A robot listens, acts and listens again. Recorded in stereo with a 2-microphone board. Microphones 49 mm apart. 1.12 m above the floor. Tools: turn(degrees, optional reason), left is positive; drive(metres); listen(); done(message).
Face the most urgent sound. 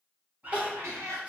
turn(degrees=-30, reason="The crying: about 30° right or 150° right.")
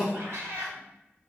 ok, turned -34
done("Facing the crying.")